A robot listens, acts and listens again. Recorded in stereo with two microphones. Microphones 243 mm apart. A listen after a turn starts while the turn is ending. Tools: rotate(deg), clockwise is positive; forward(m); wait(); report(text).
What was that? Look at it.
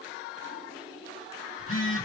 rotate(-55)
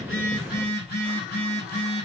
rotate(-50)
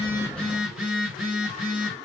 report("Found it: a phone buzzing, straight ahead, 2 to 4 m away.")